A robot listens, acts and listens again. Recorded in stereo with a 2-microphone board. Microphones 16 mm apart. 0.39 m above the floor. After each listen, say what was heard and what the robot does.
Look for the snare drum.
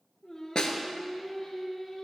The snare drum: about 60° left or 120° left. Turn 60° left.
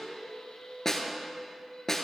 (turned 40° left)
So it is at 25° left. Turn 25° left.
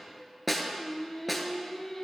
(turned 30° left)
Found it: a snare drum, straight ahead, 1 to 2 m away.